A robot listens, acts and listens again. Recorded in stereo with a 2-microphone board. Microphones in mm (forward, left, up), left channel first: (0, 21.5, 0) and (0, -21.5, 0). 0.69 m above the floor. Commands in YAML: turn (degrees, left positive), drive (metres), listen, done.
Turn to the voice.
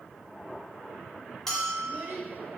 turn: -65
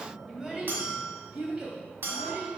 turn: -25
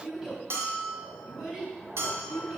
turn: -10
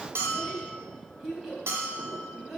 done: "Found it: a child speaking, straight ahead."